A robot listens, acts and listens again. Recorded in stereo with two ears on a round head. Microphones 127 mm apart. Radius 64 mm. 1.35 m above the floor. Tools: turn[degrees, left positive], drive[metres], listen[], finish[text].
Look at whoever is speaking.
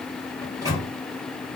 Action: listen[]
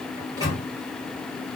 Action: listen[]
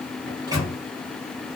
Action: finish[I can't make out anyone speaking to turn to.]